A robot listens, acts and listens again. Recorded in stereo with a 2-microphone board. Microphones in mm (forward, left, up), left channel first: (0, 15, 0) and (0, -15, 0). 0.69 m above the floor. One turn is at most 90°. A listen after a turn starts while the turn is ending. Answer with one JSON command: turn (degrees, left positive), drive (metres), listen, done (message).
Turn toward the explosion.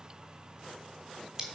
{"listen": true}
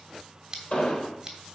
{"turn": 45}
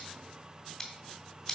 {"listen": true}
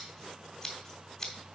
{"done": "I heard an explosion, but can't make it out now. It was about straight ahead or 90° left."}